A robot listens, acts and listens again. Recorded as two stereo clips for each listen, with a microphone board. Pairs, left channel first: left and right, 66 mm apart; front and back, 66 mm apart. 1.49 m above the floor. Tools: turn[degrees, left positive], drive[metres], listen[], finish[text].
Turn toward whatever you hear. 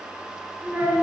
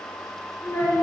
Thought: The child speaking: 30° right.
Action: turn[-30]
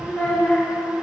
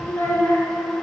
Thought: The child speaking is now 40° left.
Action: turn[40]
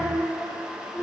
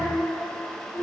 Thought: The child speaking is now 50° left.
Action: turn[50]
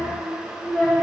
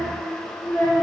Thought: The child speaking is now 25° left.
Action: turn[25]
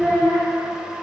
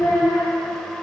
Action: finish[Facing the child speaking, 2 to 4 m away.]